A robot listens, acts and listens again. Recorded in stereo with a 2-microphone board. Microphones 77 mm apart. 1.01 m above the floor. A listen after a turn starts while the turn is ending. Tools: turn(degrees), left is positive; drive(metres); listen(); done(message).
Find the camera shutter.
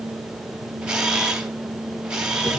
turn(degrees=-30)
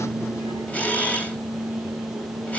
turn(degrees=20)
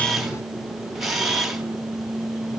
done("Facing the camera shutter.")